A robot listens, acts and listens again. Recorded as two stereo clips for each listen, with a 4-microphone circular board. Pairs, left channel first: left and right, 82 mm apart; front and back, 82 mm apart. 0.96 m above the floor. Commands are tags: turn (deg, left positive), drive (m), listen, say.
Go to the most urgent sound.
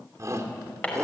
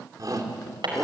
<turn deg="-140"/>
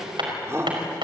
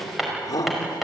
<turn deg="-35"/>
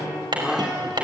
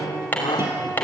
<turn deg="-10"/>
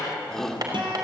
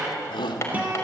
<drive m="1.0"/>
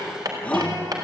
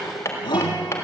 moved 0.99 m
<turn deg="15"/>
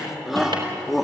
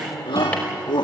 <drive m="1.0"/>
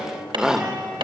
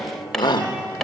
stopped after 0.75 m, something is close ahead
<turn deg="-10"/>
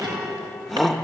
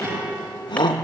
<say>I am next to the shout.</say>